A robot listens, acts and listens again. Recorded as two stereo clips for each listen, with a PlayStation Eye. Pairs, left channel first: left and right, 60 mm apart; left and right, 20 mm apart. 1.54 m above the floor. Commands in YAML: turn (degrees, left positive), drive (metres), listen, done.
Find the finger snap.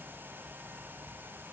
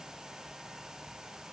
listen: true
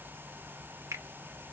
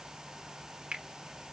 turn: -55
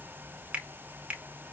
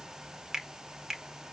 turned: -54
turn: -25
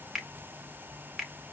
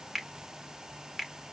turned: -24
done: "Facing the finger snap, 1 to 2 m away."